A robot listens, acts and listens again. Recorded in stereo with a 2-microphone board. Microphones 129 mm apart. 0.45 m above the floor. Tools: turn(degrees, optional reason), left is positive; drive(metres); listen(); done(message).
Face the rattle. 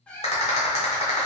turn(degrees=55, reason="The rattle: about 55° left or 125° left.")
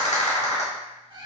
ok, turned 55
turn(degrees=65, reason="So it is at 65° left.")
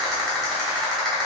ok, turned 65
done("Facing the rattle.")